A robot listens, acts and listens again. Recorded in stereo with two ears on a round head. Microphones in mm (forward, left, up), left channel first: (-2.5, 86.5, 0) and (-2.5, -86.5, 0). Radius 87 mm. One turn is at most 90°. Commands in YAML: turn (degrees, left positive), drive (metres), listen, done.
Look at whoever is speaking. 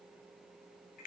listen: true
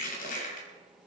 listen: true
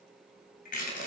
done: "I can't make out anyone speaking, only crushing."